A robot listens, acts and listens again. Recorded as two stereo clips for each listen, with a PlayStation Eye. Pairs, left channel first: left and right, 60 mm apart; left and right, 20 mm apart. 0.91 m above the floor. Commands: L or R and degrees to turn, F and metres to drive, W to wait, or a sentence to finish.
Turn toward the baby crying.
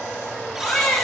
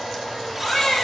L20
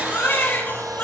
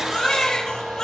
L140
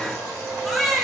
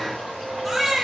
Found it: a baby crying, straight ahead.